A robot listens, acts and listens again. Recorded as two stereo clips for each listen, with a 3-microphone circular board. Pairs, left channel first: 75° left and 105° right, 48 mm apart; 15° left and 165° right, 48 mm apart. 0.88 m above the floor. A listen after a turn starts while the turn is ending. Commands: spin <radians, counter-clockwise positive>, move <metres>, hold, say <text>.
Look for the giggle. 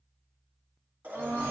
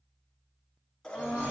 hold
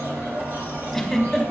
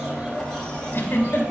spin -0.17
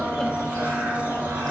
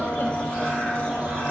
hold
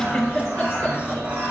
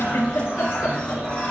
say Facing the giggle, 1 to 2 m away.